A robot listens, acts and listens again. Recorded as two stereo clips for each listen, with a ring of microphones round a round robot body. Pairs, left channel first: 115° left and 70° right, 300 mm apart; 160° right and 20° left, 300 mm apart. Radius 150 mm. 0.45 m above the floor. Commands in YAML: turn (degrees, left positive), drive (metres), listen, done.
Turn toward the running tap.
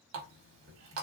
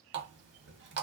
turn: -25
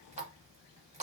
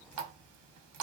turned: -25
done: "Facing the running tap."